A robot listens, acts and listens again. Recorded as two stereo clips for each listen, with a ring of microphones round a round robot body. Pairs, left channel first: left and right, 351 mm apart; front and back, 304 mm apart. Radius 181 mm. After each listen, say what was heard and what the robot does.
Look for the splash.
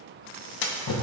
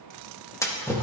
The splash: 80° left. Turn 80° left.
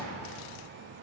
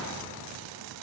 Facing where the splash came from. I can't hear it now.